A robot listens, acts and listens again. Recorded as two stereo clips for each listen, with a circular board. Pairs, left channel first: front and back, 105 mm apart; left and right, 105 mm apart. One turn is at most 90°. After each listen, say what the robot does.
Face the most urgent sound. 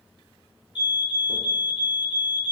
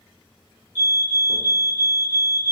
Turn 25° right.
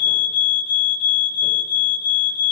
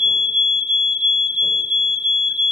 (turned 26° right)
Facing the fire alarm.